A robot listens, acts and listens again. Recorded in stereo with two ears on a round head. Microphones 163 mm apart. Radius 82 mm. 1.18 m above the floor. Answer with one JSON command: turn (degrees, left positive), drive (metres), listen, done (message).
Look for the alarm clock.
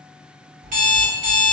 {"turn": -45}
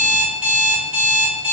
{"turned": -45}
{"turn": -10}
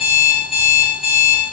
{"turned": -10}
{"done": "Found it: an alarm clock, straight ahead."}